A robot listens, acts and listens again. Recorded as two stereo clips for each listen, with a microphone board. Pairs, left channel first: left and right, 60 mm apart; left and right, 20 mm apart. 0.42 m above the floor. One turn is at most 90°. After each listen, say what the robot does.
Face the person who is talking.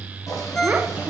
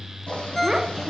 Turn 30° right.
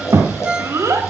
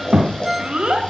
Turn 90° right.
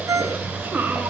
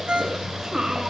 Turn 35° right.
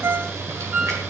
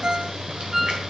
Keep listening.
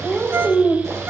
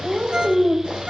Facing the child speaking.